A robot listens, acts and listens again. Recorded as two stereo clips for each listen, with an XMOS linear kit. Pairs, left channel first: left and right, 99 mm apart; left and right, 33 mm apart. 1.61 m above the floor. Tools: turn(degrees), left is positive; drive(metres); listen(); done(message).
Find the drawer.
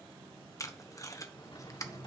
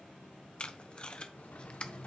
turn(degrees=55)
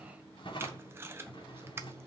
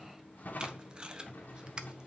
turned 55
turn(degrees=65)
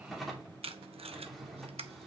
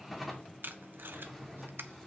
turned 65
done("Found it: a drawer, straight ahead, 2 to 4 m away.")